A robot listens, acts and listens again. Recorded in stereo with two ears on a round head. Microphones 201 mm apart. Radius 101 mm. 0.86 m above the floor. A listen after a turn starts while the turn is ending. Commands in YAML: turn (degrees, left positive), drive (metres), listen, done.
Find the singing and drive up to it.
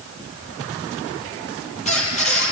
listen: true
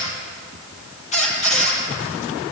listen: true
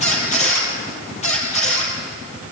done: "I can't make out singing, only a squeak."